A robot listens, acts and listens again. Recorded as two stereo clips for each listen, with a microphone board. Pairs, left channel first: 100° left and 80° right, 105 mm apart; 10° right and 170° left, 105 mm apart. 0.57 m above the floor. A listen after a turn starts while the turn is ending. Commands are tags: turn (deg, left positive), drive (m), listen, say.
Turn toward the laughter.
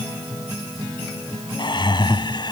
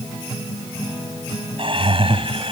<turn deg="145"/>
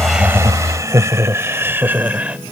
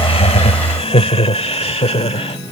<say>Found it: laughter, straight ahead.</say>